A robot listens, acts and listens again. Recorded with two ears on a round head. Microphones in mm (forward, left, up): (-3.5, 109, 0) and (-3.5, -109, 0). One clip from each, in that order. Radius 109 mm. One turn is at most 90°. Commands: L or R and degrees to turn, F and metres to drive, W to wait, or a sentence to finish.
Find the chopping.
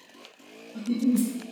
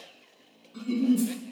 W
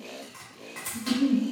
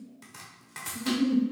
R20
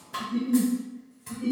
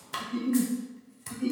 R90
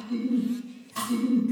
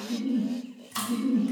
R45
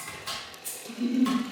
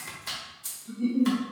Found it: chopping, straight ahead.